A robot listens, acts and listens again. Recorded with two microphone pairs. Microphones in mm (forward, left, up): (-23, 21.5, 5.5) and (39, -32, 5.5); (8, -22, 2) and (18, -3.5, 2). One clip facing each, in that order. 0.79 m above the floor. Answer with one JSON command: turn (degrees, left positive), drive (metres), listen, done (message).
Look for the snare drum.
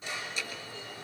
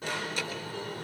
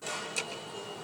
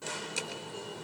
{"listen": true}
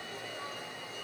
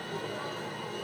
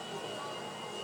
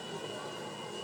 {"listen": true}
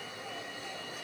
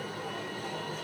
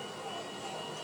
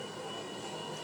{"done": "I can't make out a snare drum, only an alarm."}